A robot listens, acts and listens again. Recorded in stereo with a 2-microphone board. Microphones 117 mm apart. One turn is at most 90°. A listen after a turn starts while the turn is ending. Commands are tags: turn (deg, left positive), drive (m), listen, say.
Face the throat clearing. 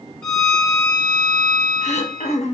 <turn deg="90"/>
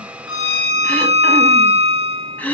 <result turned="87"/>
<turn deg="15"/>
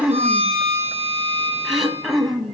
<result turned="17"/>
<say>Found it: throat clearing, straight ahead, 1 to 2 m away.</say>